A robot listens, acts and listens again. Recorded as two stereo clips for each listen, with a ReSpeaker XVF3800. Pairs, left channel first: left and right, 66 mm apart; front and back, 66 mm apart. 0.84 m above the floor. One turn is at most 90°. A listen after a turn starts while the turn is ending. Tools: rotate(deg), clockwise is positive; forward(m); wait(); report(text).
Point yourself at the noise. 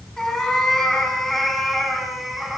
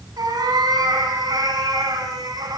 rotate(90)
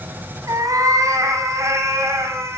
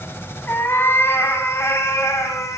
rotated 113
rotate(40)
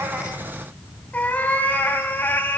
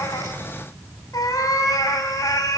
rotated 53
rotate(-30)
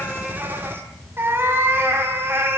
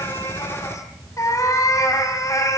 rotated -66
rotate(35)
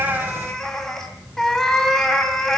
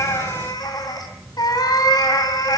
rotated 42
report("Facing the cat meowing, 2 to 4 m away.")